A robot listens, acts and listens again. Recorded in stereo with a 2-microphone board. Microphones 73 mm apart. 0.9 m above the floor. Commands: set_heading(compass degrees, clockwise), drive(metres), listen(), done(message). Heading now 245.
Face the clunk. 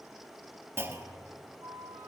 set_heading(275)
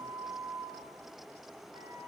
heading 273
listen()
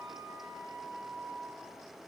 done("I heard a clunk, but can't make it out now. It was about 5° right or 120° right.")